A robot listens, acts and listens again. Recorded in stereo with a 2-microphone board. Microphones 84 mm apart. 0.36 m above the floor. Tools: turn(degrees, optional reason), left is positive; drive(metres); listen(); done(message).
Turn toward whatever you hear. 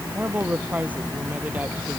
turn(degrees=-20, reason="The woman speaking: about 20° right or 160° right.")
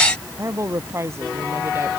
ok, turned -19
turn(degrees=-35, reason="The woman speaking: about 35° right or 145° right.")
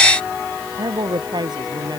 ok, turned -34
turn(degrees=-120, reason="So it is at 120° right.")
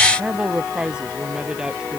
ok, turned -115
turn(degrees=-10, reason="The woman speaking is now 10° right.")
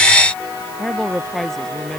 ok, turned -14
done("Facing the woman speaking.")